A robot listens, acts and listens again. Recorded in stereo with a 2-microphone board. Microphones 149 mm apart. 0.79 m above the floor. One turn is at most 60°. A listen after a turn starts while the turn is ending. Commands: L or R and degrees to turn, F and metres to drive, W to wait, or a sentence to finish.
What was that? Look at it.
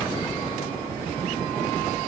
W
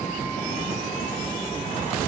W
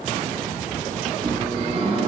R40
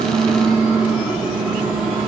Facing the microwave, 2 to 4 m away.